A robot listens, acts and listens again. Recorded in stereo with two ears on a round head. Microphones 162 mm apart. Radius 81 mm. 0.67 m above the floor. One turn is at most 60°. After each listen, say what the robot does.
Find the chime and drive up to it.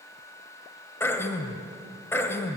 Keep listening.
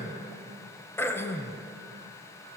Keep listening.
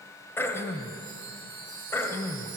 Turn 45° right.
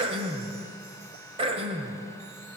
Keep listening.
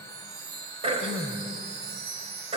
Turn 60° right.
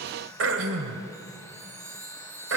Turn 15° right.
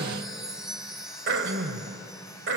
Drive 1.0 m forward.
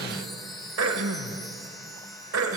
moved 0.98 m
Drive 1.0 m forward.
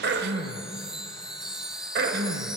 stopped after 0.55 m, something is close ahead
Arrived at the chime, straight ahead.